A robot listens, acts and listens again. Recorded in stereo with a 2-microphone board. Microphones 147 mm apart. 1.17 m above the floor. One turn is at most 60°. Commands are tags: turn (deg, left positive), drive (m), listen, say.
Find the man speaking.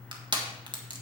<listen/>
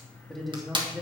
<turn deg="-30"/>
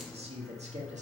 <turn deg="-60"/>
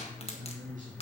<turn deg="-60"/>
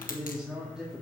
<say>Facing the man speaking, 2 to 4 m away.</say>